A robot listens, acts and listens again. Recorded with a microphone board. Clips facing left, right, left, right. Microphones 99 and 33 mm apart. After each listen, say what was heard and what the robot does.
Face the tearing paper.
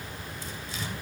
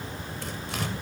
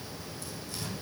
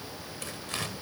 The tearing paper: about 65° right or 115° right. Turn 65° right.
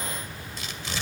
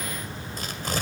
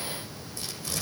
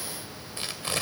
So it is at 45° right. Turn 45° right.
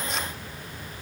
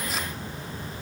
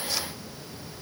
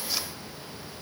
Keep listening.
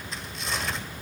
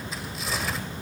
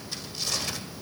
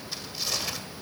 Facing the tearing paper, 1 to 2 m away.